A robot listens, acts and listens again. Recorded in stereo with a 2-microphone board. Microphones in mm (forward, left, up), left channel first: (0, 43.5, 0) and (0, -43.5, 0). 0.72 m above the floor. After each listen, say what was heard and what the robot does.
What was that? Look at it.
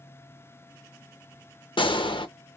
The gunshot: about 65° left or 115° left. Turn 65° left.
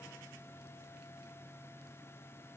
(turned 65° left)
Keep listening.
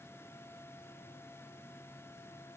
I heard a gunshot, but can't make it out now. It was about straight ahead or 50° left.